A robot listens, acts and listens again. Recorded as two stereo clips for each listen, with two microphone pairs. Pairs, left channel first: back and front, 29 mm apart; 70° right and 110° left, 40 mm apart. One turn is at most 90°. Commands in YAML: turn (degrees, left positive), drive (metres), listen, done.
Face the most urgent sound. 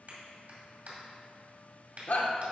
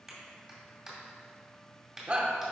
turn: 90
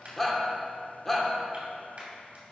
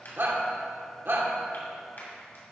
turn: 90
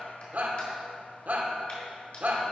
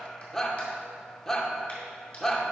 turn: 10
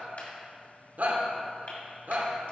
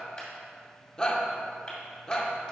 done: "Found it: a shout, straight ahead."